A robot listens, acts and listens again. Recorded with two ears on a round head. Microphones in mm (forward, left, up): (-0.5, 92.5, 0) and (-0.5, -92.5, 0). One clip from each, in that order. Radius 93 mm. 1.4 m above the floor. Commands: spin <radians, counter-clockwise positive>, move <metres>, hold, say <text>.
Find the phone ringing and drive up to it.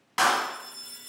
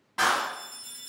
spin -0.52
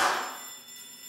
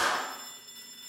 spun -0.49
spin -2.36
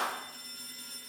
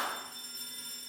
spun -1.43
spin -0.96
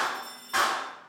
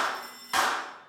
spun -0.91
move 1.0
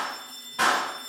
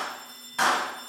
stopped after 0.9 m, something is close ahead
say I am next to the phone ringing.